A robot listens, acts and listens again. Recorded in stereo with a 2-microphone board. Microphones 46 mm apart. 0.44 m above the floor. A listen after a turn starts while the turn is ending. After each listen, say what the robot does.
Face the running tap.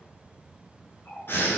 Turn 50° left.
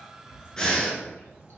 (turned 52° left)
Keep listening.
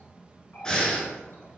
Turn 70° left.
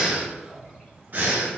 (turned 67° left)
Facing the running tap, 1 to 2 m away.